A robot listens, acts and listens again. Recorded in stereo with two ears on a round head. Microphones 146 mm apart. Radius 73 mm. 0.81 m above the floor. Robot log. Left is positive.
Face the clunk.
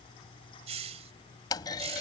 note: The clunk: about 25° left or 155° left.
cmd yaw +25
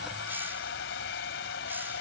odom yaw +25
cmd idle
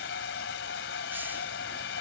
end: I heard a clunk, but can't make it out now. It was about straight ahead or 130° left.